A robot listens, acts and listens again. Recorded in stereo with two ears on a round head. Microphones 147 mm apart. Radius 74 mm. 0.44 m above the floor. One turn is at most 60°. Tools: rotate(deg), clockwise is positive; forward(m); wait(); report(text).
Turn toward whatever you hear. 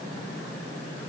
wait()
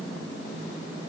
wait()
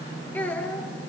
rotate(-30)
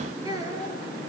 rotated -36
rotate(20)
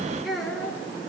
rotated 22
report("Facing the child speaking, over 4 m away.")